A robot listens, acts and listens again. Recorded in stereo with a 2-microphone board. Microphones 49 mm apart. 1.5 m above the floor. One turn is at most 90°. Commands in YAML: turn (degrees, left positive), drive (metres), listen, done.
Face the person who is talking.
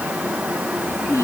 turn: 70
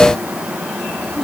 listen: true
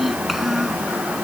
done: "Found it: a child speaking, straight ahead."